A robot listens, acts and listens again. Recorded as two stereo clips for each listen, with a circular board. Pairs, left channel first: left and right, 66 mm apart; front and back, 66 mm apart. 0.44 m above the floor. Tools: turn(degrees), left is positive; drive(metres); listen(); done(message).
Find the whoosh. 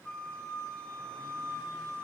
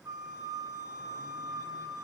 listen()
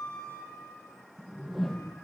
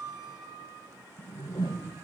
done("Facing the whoosh.")